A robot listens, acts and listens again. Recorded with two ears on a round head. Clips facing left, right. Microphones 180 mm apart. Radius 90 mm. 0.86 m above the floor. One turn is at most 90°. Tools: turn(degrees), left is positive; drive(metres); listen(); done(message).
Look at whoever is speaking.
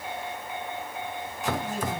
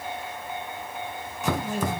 turn(degrees=-50)
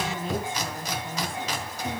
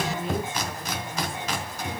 done("Facing the woman speaking, over 4 m away.")